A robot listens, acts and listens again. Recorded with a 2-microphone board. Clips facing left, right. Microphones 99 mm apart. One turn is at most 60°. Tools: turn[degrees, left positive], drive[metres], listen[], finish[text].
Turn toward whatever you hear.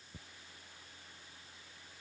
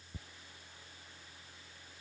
Action: listen[]
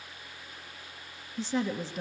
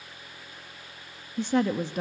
Thought: The woman speaking: about 55° right or 125° right.
Action: turn[-55]
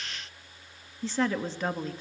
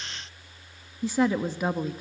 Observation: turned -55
Thought: So it is at 10° right.
Action: turn[-10]
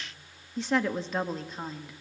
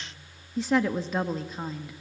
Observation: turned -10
Action: finish[Found it: a woman speaking, straight ahead, 1 to 2 m away.]